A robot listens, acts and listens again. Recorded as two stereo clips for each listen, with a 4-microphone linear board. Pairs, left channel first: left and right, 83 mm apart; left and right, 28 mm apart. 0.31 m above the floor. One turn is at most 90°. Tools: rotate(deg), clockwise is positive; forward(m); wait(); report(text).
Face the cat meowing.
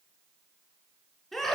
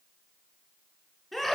wait()
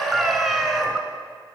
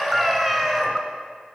rotate(30)
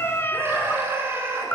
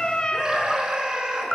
rotate(-25)
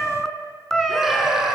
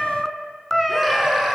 report("Facing the cat meowing, 1 to 2 m away.")